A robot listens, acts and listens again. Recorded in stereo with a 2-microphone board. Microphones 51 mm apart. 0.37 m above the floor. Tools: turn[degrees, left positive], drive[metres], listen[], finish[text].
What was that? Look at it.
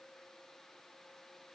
Action: listen[]
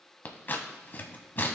Thought: The scissors: about 40° left or 140° left.
Action: turn[40]
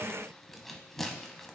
Action: finish[Found it: scissors, straight ahead, 1 to 2 m away.]